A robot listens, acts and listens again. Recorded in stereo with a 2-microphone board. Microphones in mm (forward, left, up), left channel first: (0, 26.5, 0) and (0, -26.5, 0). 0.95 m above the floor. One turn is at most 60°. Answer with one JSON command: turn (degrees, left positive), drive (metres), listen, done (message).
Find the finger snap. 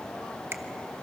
{"turn": -55}
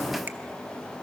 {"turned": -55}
{"listen": true}
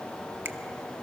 {"listen": true}
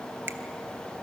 {"done": "I heard a finger snap, but can't make it out now. It was about straight ahead or 70° right."}